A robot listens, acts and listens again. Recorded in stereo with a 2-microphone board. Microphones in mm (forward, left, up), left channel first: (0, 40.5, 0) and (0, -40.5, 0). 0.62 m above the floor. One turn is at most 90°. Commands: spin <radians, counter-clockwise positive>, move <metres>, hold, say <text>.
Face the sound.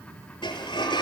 spin 1.57
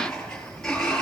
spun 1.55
spin 0.17
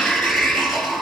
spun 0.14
say Facing the sliding door.